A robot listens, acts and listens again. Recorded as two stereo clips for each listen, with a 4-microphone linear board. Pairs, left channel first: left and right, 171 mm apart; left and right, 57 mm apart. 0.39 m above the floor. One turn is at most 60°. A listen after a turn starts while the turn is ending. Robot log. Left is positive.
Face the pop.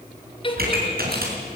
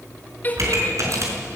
note: The pop: about 60° right or 120° right.
cmd yaw -60
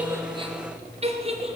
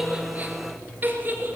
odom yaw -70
cmd idle
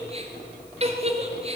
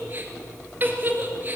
end: I heard a pop, but can't make it out now. It was about 10° left or 50° right.